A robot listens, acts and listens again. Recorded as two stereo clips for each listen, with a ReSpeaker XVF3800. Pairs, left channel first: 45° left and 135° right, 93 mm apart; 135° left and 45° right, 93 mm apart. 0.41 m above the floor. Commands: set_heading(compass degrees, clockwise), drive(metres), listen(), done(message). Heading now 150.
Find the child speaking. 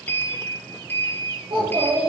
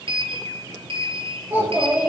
set_heading(265)
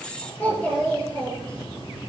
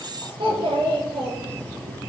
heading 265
set_heading(290)
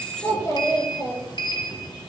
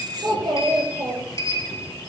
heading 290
done("Facing the child speaking, over 4 m away.")